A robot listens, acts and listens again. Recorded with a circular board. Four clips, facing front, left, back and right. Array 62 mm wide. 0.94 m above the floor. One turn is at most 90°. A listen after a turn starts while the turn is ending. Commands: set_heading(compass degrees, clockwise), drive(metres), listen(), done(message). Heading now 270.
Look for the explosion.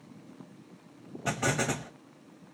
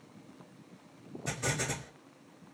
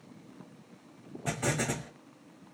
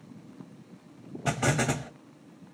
set_heading(340)
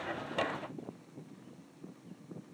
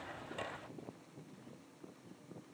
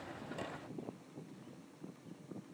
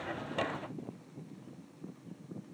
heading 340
done("I heard an explosion from this way, but can't make it out now.")